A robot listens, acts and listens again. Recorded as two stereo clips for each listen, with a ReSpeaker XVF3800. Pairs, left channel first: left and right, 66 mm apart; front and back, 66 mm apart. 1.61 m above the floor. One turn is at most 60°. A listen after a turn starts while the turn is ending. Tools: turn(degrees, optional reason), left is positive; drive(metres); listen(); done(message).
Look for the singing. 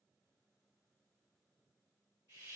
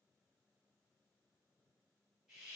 listen()
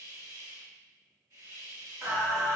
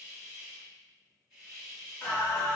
turn(degrees=-60, reason="The singing: 65° right.")
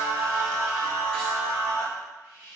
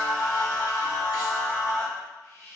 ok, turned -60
turn(degrees=10, reason="The singing is now 10° left.")
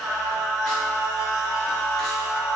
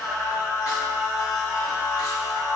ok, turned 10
done("Found it: singing, straight ahead, 1 to 2 m away.")